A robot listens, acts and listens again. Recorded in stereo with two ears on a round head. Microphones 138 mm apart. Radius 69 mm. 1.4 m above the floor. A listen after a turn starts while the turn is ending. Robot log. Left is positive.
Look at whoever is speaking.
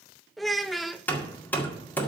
cmd yaw +30
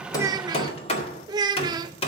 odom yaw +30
note: So it is at 30° right.
cmd yaw -30
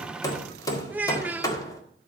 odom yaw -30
note: The child speaking is now 10° right.
cmd yaw -10
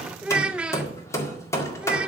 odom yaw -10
note: The child speaking is now 10° right.
cmd yaw -10
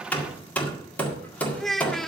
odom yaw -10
end: Found it: a child speaking, straight ahead, under 1 m away.